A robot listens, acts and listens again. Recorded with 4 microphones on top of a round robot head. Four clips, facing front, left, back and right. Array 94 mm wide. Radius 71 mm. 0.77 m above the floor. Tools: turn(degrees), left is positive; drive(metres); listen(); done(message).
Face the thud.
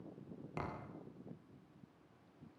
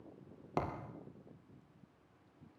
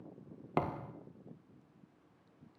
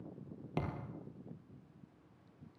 turn(degrees=155)
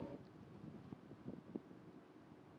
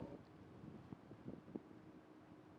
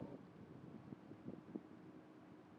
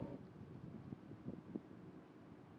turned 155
done("I heard a thud from this way, but can't make it out now.")